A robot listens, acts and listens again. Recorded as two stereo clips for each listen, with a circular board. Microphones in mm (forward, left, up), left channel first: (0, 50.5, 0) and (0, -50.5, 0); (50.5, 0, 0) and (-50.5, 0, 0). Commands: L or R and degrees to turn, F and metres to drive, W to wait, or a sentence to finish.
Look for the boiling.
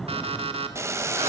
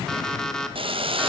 R150
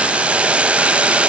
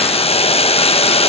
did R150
R10
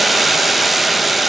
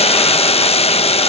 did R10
Found it: boiling, straight ahead.